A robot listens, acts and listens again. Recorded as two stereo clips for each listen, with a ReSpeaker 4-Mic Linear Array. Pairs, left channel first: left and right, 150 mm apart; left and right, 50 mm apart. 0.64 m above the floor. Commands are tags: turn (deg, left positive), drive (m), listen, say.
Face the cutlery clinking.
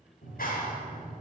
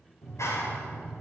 <listen/>
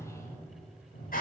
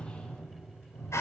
<listen/>
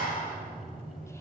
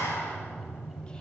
<say>I can't make out cutlery clinking, only a clap.</say>